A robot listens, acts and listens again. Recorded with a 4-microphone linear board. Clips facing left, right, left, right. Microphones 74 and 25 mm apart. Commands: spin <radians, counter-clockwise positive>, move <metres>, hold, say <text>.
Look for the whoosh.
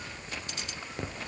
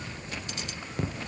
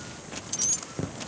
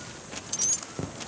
hold
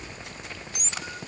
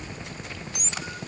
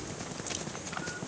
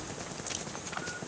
hold
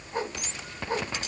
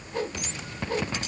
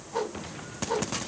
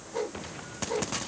spin 0.52
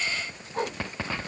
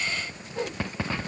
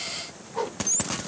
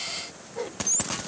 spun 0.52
spin 2.09
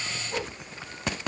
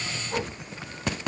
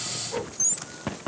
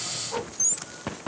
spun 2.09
spin -0.35
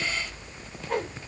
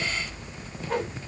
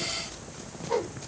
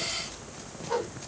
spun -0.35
say Found it: a whoosh, straight ahead.